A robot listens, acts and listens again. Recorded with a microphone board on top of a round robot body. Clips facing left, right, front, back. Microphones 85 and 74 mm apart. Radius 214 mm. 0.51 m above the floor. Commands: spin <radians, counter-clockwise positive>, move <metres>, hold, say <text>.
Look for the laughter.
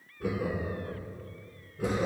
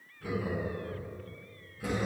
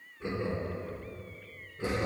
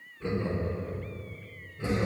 spin 1.13
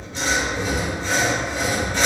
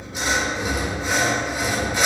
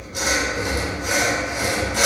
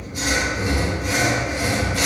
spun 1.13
say Found it: laughter, straight ahead, 1 to 2 m away.